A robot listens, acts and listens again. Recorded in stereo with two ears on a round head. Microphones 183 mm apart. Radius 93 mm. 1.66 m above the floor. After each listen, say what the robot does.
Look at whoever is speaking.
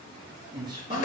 Turn 20° right.
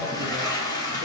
Keep listening.
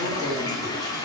Keep listening.
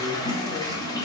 I heard a man speaking, but can't make it out now. It was about straight ahead or 140° right.